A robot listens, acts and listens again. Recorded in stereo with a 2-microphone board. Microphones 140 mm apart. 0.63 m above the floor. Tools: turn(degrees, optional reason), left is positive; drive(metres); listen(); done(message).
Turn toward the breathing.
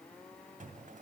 listen()
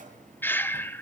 turn(degrees=30)
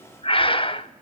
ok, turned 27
turn(degrees=135, reason="So it is at 135° left.")
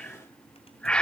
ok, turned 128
done("Facing the breathing, under 1 m away.")